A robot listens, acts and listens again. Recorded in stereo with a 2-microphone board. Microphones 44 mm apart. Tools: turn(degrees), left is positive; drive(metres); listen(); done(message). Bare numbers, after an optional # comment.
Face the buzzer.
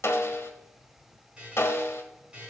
# The buzzer: about 20° right or 160° right.
turn(-20)
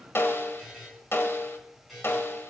done("Found it: a buzzer, straight ahead.")